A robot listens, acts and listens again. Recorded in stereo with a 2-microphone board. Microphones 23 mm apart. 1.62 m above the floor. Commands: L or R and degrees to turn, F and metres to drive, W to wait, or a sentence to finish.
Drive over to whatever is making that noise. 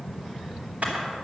R70
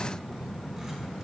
W
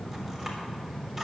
W
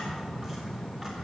I heard a camera shutter, but can't make it out now. It was about straight ahead or 40° right. I did not reach it.